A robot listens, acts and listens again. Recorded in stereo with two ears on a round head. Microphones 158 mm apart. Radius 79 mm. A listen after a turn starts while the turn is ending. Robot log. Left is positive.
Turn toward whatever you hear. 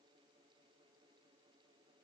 cmd idle
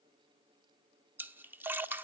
cmd yaw -30
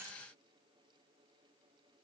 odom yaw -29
cmd idle
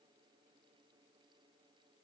end: I heard a splash, but can't make it out now. It was about 15° left or 140° right.